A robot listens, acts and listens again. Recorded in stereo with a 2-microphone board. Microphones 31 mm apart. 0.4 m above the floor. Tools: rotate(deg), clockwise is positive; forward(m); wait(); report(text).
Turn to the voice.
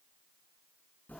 wait()
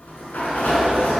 wait()
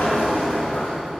report("I can't make out anyone speaking to turn to.")